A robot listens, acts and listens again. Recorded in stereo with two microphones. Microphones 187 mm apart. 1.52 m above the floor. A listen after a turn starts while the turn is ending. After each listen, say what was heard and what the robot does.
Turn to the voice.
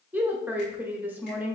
Turn 30° right.
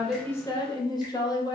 So it is at 20° left. Turn 20° left.
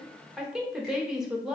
Found it: a woman speaking, straight ahead, under 1 m away.